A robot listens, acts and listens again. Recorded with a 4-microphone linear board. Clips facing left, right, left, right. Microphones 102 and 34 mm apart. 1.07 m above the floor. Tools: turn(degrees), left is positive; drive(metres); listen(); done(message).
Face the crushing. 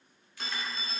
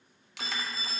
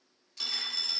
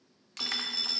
turn(degrees=-90)
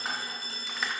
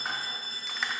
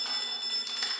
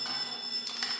listen()
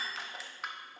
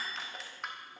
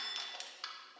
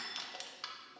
done("Found it: crushing, straight ahead.")